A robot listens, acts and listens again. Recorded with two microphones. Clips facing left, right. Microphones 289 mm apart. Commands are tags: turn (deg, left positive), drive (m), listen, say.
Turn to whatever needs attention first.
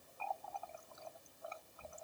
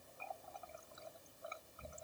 <listen/>
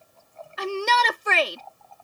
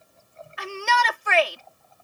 <turn deg="45"/>
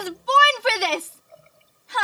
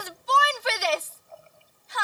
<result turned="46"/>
<turn deg="85"/>
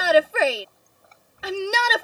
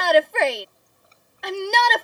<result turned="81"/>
<say>Found it: a shout, straight ahead.</say>